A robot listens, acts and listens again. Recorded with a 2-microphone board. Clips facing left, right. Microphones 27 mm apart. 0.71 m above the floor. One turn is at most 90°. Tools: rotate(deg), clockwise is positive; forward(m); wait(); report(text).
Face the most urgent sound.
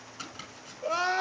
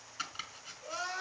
rotate(-40)
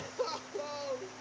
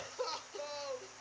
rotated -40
report("Found it: crying, straight ahead.")